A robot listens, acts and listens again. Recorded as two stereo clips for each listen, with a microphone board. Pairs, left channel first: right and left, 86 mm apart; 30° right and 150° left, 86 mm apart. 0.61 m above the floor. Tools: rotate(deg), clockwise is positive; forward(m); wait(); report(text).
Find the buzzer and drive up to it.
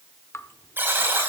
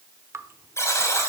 rotate(-25)
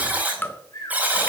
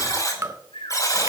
rotate(-20)
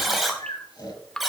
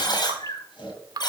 forward(1.0)
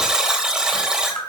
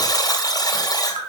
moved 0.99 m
forward(1.0)
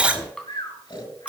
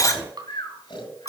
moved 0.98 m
rotate(-15)
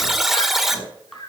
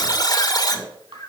forward(1.0)
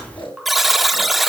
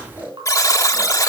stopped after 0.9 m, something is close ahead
report("I am next to the buzzer.")